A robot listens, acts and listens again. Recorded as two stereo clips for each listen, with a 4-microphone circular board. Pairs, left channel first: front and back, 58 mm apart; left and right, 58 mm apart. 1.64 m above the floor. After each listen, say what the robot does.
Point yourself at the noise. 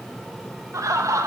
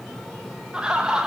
Turn 170° right.
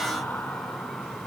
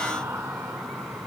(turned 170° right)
Keep listening.
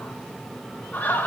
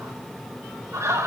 Turn 60° right.
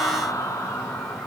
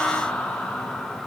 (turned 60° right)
Turn 10° left.
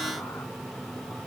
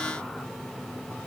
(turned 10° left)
Keep listening.
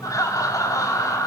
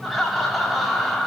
Found it: laughter, straight ahead, over 4 m away.